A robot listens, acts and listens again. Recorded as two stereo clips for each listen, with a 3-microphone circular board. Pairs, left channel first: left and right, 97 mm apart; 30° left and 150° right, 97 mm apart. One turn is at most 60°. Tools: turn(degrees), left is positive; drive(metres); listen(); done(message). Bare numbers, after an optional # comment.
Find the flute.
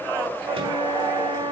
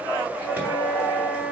# The flute: 35° right.
turn(-35)
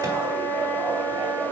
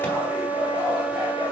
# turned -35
done("Found it: a flute, straight ahead, over 4 m away.")